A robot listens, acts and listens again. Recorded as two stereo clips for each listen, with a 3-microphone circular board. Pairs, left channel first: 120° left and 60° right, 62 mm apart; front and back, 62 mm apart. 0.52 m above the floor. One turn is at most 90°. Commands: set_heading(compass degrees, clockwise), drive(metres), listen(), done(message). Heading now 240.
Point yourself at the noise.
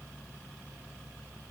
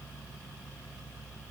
listen()
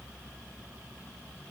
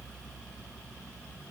listen()
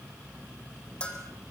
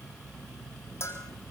set_heading(190)
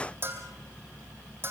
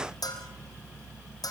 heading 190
done("Found it: a bell, straight ahead, over 4 m away.")